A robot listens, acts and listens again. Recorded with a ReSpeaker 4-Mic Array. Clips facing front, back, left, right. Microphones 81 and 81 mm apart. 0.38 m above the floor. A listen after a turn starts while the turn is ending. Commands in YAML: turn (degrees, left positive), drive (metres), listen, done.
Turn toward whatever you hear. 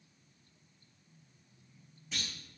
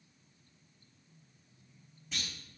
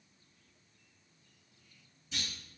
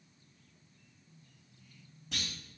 turn: -90
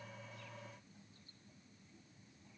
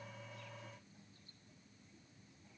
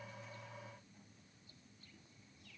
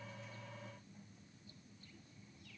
done: "I heard a clunk from this way, but can't make it out now."